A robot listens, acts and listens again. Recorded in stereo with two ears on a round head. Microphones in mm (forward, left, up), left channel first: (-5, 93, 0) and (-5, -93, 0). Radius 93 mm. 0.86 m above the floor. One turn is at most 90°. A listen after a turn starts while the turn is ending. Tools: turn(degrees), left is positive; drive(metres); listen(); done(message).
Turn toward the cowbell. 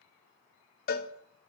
turn(degrees=45)
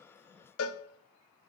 turn(degrees=85)
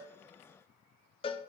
turn(degrees=25)
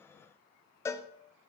turn(degrees=15)
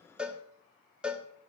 done("Found it: a cowbell, straight ahead, under 1 m away.")